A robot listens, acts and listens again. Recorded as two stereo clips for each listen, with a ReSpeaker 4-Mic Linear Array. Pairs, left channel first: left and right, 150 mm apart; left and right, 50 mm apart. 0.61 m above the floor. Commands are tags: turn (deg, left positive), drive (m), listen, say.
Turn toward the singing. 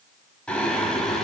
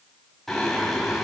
<turn deg="30"/>
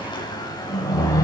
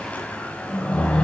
<turn deg="155"/>
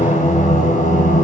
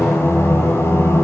<turn deg="60"/>
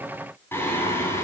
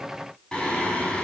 <turn deg="15"/>
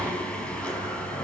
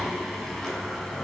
<say>Found it: singing, straight ahead.</say>